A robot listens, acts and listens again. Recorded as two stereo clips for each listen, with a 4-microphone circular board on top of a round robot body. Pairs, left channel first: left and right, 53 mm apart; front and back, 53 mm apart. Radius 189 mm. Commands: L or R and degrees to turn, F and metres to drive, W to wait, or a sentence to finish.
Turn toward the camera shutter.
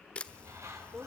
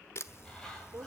L25
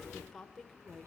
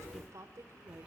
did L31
W
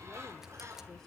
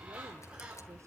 W
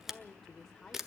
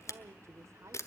Facing the camera shutter, 1 to 2 m away.